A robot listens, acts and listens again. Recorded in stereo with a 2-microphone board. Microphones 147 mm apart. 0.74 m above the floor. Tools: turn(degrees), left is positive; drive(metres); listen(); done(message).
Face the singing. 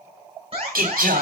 turn(degrees=-90)
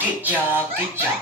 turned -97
turn(degrees=-15)
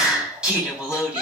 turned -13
turn(degrees=-10)
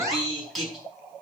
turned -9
done("Facing the singing, over 4 m away.")